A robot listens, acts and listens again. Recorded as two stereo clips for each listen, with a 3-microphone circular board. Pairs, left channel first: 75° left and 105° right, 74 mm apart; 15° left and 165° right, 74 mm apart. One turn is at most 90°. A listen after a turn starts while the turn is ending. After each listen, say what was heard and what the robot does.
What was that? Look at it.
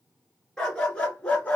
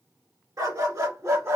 The dog barking: 145° left. Turn 90° left.
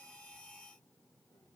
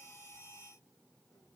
Nothing new. It was at 55° left. Turn 55° left.
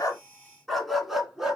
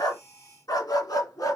The dog barking is now 20° right. Turn 20° right.
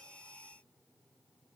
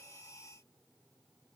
Keep listening.
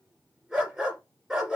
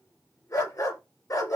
The dog barking is now 25° right. Turn 25° right.
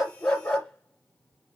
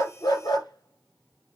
Found it: a dog barking, straight ahead, 1 to 2 m away.